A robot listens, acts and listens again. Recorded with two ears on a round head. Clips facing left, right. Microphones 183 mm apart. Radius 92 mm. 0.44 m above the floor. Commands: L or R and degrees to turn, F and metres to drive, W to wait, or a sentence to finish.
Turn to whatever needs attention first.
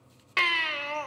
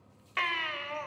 L50
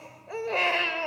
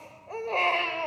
L15
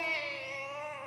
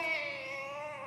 Found it: a baby crying, straight ahead.